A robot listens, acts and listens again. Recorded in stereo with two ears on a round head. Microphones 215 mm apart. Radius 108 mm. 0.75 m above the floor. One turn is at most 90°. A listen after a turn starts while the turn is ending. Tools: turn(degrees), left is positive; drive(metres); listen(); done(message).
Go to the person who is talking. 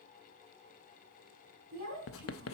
turn(degrees=-40)
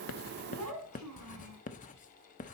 turn(degrees=-90)
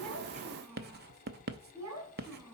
turn(degrees=-10)
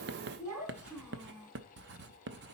drive(metres=1.0)
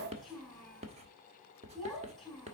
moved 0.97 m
drive(metres=1.0)
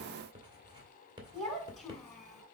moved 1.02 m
drive(metres=1.0)
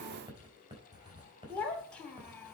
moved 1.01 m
drive(metres=1.0)
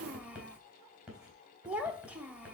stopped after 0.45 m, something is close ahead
done("Arrived at the child speaking, straight ahead.")